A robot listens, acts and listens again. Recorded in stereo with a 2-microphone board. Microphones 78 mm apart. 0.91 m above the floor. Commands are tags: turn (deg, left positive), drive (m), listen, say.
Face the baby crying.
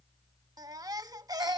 <turn deg="-55"/>
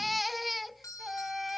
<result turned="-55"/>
<say>Found it: a baby crying, straight ahead.</say>